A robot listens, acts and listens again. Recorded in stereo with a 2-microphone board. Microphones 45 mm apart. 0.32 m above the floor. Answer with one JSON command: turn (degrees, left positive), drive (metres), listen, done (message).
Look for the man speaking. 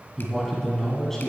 {"turn": 30}
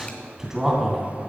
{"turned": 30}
{"done": "Found it: a man speaking, straight ahead, 2 to 4 m away."}